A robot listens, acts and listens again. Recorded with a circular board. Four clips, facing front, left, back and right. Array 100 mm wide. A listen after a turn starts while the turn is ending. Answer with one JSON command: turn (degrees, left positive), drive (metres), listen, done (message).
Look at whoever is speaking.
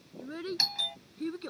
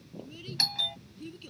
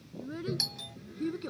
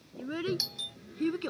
{"turn": -85}
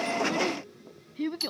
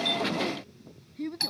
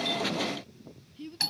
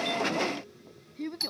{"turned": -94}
{"turn": -10}
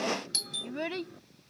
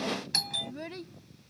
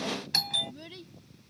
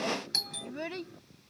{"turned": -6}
{"turn": -20}
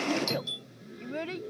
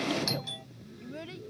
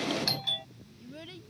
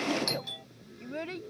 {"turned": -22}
{"turn": -35}
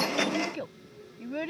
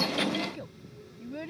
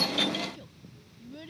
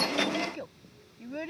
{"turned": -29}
{"turn": -15}
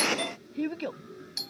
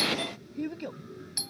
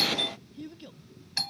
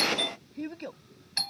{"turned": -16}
{"done": "Found it: a child speaking, straight ahead."}